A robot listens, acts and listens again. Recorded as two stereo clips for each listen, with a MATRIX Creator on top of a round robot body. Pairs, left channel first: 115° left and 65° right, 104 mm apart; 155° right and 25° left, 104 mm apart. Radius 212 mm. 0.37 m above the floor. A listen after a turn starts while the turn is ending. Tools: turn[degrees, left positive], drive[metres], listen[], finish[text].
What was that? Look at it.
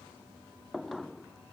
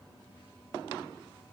Action: listen[]
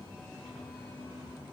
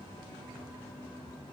Action: listen[]
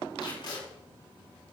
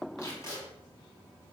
Thought: The tape being pulled: 145° left.
Action: turn[145]
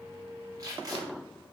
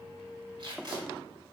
Thought: The tape being pulled is now 15° right.
Action: turn[-15]
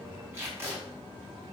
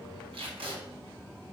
Action: finish[Found it: tape being pulled, straight ahead.]